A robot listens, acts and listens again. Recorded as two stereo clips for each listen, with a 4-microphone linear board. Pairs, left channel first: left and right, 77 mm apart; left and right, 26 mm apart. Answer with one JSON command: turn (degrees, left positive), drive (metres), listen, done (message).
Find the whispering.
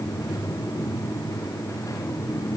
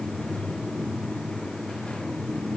{"listen": true}
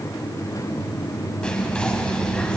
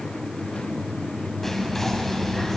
{"turn": 30}
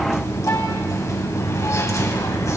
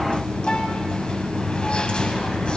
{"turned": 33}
{"turn": 135}
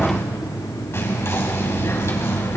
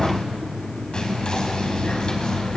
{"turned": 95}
{"turn": 40}
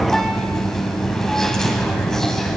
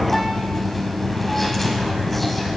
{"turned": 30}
{"done": "Facing the whispering, over 4 m away."}